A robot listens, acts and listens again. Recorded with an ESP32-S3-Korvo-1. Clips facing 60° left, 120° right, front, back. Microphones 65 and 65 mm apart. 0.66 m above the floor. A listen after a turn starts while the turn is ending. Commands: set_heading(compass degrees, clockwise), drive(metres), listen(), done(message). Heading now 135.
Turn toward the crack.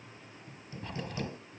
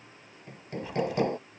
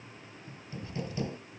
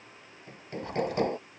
set_heading(340)
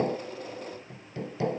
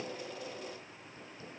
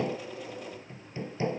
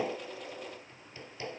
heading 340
done("Facing where the crack came from. I can't hear it now.")